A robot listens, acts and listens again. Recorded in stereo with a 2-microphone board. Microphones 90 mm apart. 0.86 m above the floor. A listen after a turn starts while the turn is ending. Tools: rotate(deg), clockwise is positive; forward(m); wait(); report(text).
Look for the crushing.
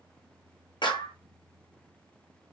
wait()
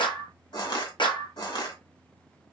rotate(-65)
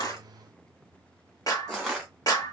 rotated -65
report("Facing the crushing.")